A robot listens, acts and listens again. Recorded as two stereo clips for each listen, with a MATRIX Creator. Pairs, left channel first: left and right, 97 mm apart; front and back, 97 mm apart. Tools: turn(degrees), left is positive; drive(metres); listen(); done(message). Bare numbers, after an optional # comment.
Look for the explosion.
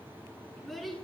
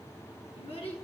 listen()
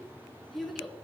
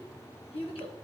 listen()
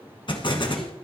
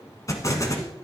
# The explosion: 55° left.
turn(55)
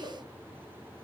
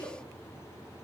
done("Facing where the explosion came from. I can't hear it now.")